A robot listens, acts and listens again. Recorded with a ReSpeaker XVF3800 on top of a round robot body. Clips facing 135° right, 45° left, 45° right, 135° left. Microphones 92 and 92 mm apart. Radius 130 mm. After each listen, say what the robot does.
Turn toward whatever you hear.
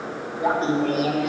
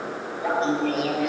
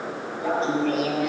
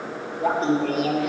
Turn 175° right.
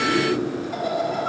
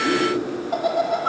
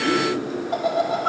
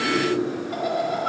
Turn 20° left.
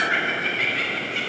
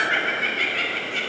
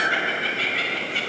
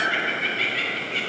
Turn 15° left.
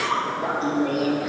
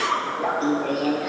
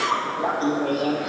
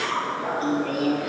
Turn 15° left.
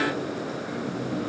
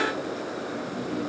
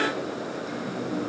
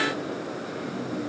Facing the laughter.